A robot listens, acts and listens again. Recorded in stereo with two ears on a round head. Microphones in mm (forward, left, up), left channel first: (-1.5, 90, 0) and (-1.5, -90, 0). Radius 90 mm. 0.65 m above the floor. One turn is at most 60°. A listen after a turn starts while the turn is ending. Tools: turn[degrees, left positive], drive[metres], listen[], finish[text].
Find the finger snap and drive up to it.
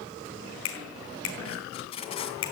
Action: turn[60]
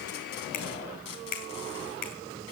Thought: So it is at 45° left.
Action: turn[45]
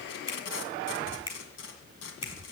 Thought: The finger snap is now 25° left.
Action: turn[25]
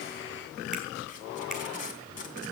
Action: listen[]
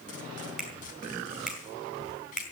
Action: drive[1.0]
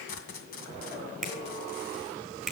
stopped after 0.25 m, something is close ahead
Action: finish[Blocked. The finger snap is further on, straight ahead.]